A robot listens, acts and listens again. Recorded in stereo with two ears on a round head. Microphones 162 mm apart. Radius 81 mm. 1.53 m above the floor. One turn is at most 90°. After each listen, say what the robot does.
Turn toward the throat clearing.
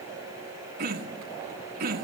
Turn 55° right.
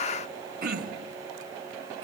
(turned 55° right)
Turn 60° right.
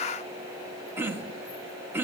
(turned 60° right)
Turn 15° right.
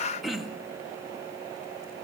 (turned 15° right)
Facing the throat clearing.